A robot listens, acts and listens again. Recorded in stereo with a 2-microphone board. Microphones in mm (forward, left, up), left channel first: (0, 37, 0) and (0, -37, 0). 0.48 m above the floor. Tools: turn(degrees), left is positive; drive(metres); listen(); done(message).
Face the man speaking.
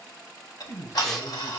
turn(degrees=55)
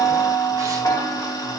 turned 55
listen()
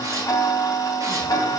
listen()
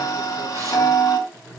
done("Found it: a man speaking, straight ahead, over 4 m away.")